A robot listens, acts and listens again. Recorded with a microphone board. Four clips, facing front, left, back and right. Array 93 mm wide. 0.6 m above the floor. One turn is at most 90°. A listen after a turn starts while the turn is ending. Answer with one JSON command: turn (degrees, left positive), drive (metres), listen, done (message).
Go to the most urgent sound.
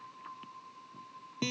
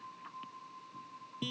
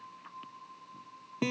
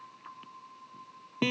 {"listen": true}
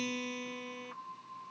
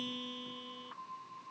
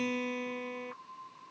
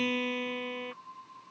{"listen": true}
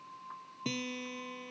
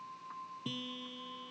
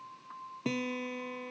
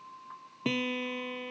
{"done": "I can't make out anything urgent to turn to."}